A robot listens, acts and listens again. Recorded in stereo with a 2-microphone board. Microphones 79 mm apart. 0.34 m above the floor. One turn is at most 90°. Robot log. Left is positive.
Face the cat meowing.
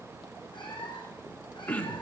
cmd yaw +90
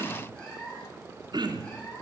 note: So it is at 15° left.
cmd yaw +15
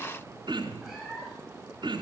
end: Found it: a cat meowing, straight ahead.